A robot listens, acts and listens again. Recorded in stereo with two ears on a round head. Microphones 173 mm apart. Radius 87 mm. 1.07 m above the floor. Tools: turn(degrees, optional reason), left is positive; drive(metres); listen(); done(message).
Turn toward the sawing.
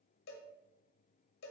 listen()
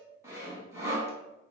turn(degrees=-15, reason="The sawing: about 15° right or 165° right.")
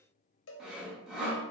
done("Found it: sawing, straight ahead.")